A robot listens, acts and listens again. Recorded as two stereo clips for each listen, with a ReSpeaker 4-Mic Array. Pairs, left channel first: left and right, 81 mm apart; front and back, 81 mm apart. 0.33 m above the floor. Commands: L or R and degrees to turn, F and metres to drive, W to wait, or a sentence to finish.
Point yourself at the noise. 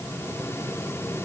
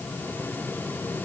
W
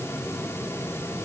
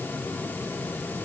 W
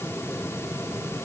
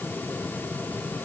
I can't make out anything.